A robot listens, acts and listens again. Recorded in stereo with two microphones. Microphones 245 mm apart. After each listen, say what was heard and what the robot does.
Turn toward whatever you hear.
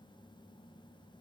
Keep listening.
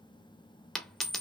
Turn 30° left.
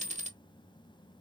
So it is at 30° right. Turn 30° right.
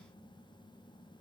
I heard a dropped coin from this way, but can't make it out now.